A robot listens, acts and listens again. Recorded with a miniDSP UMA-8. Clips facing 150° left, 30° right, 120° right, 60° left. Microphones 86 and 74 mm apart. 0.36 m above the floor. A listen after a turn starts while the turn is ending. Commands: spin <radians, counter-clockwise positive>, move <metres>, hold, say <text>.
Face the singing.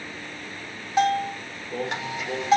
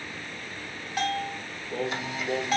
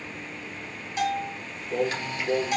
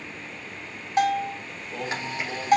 spin -2.09
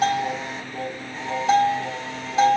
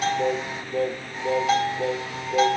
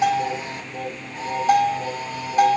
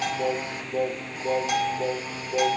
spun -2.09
say Facing the singing, 2 to 4 m away.